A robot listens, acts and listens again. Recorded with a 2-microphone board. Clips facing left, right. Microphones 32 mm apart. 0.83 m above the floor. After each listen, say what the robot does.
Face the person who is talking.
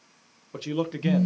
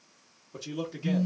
Turn 45° left.
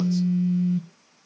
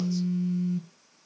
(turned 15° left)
Keep listening.
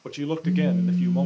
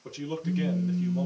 Turn 125° left.
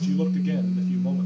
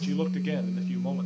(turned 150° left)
Turn 25° right.
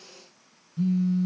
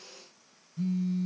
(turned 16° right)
Turn 10° right.
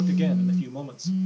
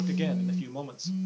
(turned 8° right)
Turn 10° right.
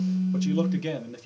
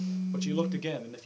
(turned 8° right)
Facing the man speaking.